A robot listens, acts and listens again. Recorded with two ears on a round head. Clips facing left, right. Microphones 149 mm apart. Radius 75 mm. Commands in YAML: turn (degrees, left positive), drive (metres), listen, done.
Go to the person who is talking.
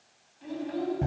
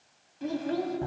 turn: -70
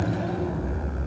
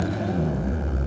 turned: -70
listen: true
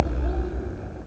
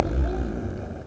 listen: true
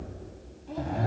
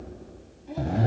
done: "I heard a child speaking, but can't make it out now. It was about straight ahead or 40° right. I did not reach it."